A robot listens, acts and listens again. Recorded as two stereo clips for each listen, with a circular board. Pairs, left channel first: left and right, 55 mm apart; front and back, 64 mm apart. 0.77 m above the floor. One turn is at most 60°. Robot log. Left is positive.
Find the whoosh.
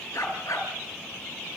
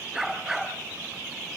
cmd idle
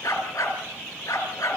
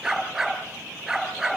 cmd idle
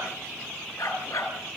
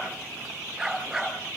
end: I can't make out a whoosh to turn to.